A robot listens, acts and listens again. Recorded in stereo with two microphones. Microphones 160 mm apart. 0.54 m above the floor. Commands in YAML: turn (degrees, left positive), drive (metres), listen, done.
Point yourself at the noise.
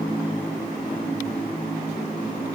listen: true
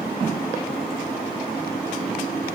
listen: true
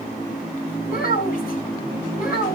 turn: 65
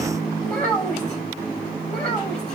turn: 10
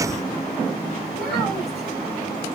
listen: true
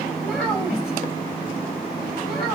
done: "Facing the child speaking."